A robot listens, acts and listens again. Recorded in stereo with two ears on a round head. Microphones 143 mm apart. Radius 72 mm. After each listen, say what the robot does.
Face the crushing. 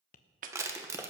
Turn 20° right.
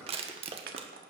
Turn 140° right.
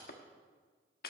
Keep listening.
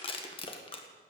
Turn 35° left.
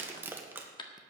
Turn 15° right.
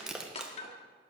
Found it: crushing, straight ahead, 1 to 2 m away.